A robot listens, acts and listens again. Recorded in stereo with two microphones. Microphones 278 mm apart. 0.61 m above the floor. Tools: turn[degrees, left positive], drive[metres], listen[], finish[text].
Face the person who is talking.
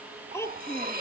Action: turn[30]
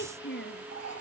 Thought: So it is at 140° left.
Action: turn[140]
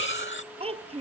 Thought: The child speaking is now 20° right.
Action: turn[-20]
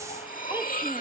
Action: listen[]
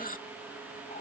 Action: listen[]
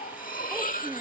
Action: finish[Facing where the child speaking came from. I can't hear it now.]